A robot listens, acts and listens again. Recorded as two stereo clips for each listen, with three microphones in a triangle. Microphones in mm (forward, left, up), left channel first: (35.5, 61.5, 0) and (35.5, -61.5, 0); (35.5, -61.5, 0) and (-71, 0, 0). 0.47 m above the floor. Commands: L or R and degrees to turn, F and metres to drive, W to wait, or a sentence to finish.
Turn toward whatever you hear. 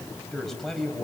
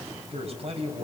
L180
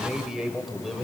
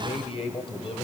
Facing the man speaking.